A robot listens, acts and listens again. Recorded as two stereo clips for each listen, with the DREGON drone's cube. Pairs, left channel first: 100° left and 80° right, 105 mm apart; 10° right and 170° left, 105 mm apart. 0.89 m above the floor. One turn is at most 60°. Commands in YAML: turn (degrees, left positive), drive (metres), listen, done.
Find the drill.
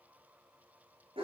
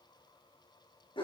listen: true
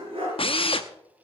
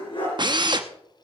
turn: 60
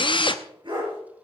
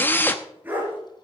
turn: 60
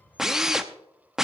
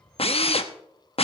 done: "Found it: a drill, straight ahead."